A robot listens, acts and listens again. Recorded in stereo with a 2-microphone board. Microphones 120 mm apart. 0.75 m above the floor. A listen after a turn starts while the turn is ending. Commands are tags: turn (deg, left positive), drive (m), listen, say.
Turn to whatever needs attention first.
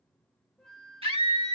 <turn deg="-55"/>
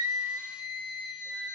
<turn deg="-10"/>
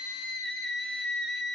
<say>Found it: a scream, straight ahead.</say>